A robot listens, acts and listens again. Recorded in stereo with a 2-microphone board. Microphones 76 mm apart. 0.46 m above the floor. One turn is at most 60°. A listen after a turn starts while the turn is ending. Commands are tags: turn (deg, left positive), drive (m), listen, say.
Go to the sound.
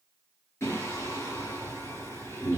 <turn deg="30"/>
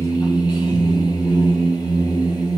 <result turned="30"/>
<turn deg="60"/>
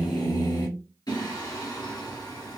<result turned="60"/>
<turn deg="60"/>
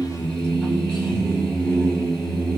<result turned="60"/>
<turn deg="15"/>
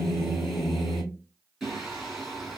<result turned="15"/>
<drive m="1.0"/>
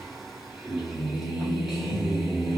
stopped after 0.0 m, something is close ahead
<say>Blocked. The singing is further on, straight ahead.</say>